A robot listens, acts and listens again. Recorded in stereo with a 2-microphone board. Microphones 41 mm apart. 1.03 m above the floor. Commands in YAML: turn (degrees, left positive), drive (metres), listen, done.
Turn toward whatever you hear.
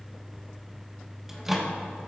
turn: -30
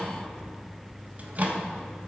turn: -140
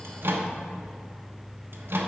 turn: -65
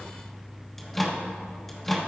done: "Facing the microwave, 1 to 2 m away."